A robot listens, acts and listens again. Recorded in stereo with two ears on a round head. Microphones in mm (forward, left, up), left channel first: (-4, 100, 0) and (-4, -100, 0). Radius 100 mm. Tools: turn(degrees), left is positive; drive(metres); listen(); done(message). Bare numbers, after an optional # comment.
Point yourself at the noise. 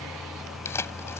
turn(30)
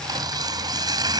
# So it is at 20° right.
turn(-20)
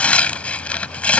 done("Found it: tearing paper, straight ahead.")